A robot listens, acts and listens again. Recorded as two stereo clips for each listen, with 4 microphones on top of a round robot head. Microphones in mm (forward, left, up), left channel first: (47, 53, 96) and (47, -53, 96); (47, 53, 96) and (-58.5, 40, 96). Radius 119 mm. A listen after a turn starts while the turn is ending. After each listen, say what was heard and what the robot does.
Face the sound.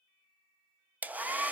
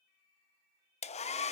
The hair dryer: 15° right. Turn 15° right.
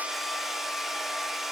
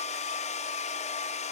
Facing the hair dryer, 1 to 2 m away.